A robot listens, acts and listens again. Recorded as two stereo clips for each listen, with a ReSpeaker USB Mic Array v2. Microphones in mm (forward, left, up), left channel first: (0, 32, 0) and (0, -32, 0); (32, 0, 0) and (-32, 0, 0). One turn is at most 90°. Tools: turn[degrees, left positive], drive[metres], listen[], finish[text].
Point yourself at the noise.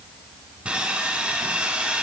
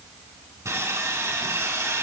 Thought: The sawing: 160° right.
Action: turn[-90]
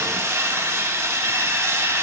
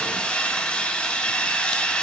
Thought: The sawing is now 70° right.
Action: turn[-70]
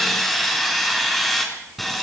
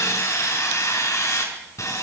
Action: finish[Facing the sawing.]